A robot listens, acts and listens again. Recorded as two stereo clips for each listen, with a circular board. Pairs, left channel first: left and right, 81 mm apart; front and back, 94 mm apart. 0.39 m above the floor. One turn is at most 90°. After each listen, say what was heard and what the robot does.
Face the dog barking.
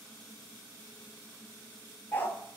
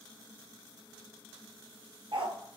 The dog barking: 155° left. Turn 90° left.
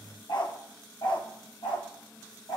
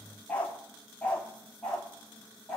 The dog barking is now 85° left. Turn 85° left.
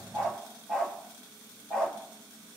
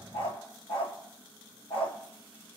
The dog barking is now 10° left. Turn 10° left.
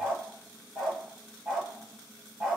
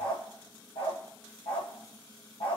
Facing the dog barking, 2 to 4 m away.